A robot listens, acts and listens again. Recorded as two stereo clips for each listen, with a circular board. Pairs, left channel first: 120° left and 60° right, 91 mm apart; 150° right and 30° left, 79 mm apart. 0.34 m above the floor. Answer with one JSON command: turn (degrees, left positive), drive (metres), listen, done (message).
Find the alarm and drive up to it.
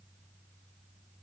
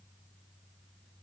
{"listen": true}
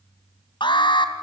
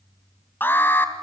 {"turn": 145}
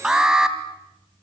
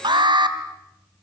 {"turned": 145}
{"turn": 20}
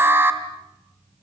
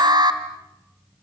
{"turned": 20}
{"drive": 1.0}
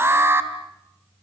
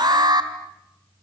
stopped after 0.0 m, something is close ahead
{"done": "Blocked. The alarm is further on, straight ahead."}